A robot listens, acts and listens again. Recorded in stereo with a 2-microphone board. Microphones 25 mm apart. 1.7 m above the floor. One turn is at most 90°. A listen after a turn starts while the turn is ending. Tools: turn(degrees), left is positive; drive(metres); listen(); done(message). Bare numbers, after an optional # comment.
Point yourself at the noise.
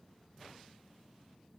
listen()
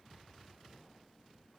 listen()
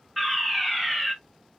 turn(30)
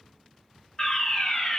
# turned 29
# So it is at 155° left.
turn(90)
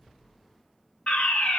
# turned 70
# The fire alarm is now 85° left.
turn(85)
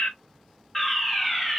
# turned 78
done("Facing the fire alarm, 1 to 2 m away.")